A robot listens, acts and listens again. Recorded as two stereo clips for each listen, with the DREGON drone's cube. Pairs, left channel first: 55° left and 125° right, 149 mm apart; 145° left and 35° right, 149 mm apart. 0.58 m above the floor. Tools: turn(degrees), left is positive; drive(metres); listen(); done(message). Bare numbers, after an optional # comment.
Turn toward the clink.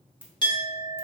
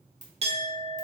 done("Facing the clink.")